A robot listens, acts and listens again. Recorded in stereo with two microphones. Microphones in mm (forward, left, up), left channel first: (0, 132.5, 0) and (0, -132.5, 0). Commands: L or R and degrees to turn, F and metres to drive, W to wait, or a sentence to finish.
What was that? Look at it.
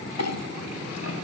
L70
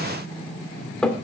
Found it: a clink, straight ahead.